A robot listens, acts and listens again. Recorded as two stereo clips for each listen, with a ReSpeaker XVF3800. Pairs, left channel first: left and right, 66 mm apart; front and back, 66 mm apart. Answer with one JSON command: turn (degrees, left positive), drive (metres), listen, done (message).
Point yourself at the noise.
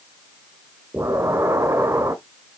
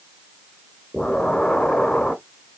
{"turn": -75}
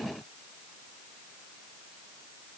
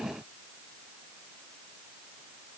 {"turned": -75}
{"done": "Facing where the explosion came from. I can't hear it now."}